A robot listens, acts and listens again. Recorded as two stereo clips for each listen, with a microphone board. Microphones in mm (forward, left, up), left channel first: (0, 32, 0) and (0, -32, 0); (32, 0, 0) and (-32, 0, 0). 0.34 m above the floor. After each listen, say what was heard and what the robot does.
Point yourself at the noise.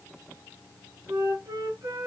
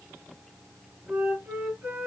The flute: 120° right. Turn 120° right.
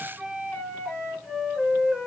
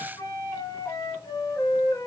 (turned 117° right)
Facing the flute.